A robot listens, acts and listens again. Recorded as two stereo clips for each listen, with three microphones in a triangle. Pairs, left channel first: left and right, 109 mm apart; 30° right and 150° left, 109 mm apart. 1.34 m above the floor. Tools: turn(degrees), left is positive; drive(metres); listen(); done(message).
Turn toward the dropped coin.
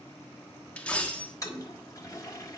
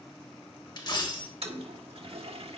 turn(degrees=15)
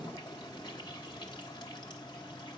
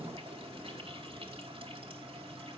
done("I heard a dropped coin from this way, but can't make it out now.")